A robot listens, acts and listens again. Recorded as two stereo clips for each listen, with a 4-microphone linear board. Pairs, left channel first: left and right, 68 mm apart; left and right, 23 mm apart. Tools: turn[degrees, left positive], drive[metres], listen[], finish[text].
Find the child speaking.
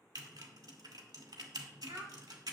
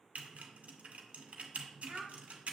Thought: The child speaking: about 55° right or 125° right.
Action: turn[-55]
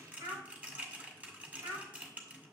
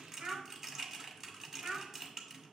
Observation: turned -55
Thought: So it is at 65° right.
Action: turn[-65]
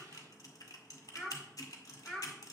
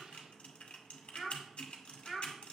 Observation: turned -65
Action: finish[Found it: a child speaking, straight ahead, 2 to 4 m away.]